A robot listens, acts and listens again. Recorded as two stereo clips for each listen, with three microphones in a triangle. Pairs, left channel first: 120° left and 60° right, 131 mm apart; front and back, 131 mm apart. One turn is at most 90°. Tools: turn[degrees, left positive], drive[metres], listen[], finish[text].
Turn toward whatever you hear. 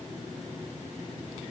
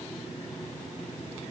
Action: listen[]
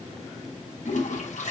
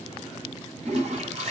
Thought: The toilet flushing: 145° left.
Action: turn[90]
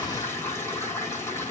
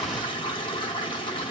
Thought: The toilet flushing is now 50° left.
Action: turn[50]
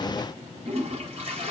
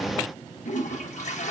Thought: The toilet flushing is now 20° right.
Action: turn[-20]
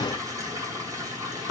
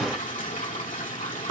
Action: finish[Found it: a toilet flushing, straight ahead.]